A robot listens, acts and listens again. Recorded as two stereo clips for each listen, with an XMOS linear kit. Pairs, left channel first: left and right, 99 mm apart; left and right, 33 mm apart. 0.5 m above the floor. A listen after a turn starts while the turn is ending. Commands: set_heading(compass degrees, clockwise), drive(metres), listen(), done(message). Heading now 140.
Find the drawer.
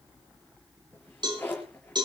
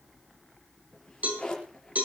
set_heading(120)
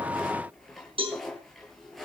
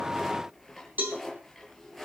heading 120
done("Facing the drawer.")